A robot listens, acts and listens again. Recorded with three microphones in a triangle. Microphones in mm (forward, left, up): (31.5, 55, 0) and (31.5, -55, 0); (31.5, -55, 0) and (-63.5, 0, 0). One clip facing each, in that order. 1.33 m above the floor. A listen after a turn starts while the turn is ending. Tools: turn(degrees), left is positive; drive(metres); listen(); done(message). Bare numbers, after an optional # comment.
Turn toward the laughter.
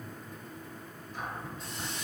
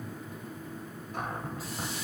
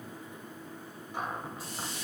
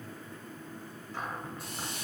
listen()
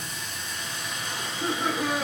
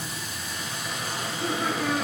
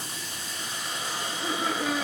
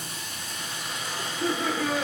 # The laughter: 160° left.
turn(160)
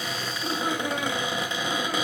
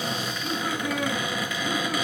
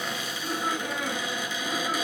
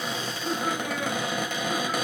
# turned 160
# The laughter is now 50° left.
turn(50)
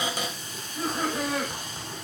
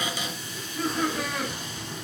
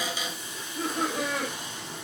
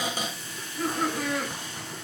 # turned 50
# The laughter is now 25° left.
turn(25)
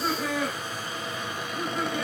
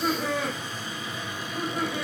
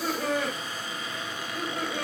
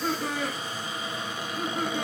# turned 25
done("Found it: laughter, straight ahead.")